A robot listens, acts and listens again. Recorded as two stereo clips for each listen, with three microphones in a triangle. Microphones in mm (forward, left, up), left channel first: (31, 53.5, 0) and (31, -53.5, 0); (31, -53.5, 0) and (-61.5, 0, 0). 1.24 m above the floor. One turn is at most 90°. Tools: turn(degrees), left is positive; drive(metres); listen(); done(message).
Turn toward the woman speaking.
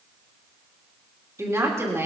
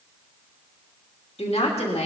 turn(degrees=-25)
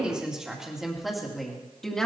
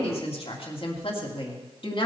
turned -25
done("Facing the woman speaking.")